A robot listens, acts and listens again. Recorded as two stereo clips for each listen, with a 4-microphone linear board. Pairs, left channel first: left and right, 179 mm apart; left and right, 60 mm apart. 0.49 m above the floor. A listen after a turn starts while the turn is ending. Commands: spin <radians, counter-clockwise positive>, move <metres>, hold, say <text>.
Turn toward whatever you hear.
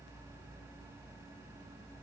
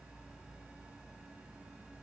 hold
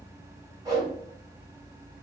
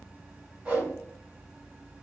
spin -0.44
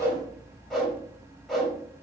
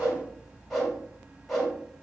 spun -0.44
say Found it: a whoosh, straight ahead, 1 to 2 m away.